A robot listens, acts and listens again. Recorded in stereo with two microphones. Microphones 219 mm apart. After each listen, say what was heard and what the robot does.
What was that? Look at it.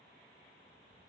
Keep listening.
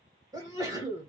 The sneeze: about 15° right or 165° right. Turn 15° right.
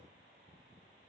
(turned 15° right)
Keep listening.
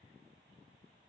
I heard a sneeze, but can't make it out now. It was about straight ahead or 150° right.